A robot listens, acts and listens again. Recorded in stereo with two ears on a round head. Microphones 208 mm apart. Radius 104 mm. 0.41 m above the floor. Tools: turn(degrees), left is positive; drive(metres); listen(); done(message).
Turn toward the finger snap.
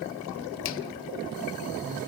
listen()
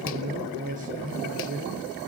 listen()
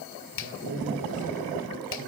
turn(degrees=55)
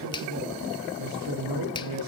turn(degrees=25)
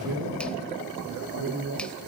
listen()
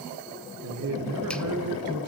listen()
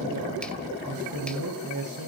done("I heard a finger snap from this way, but can't make it out now.")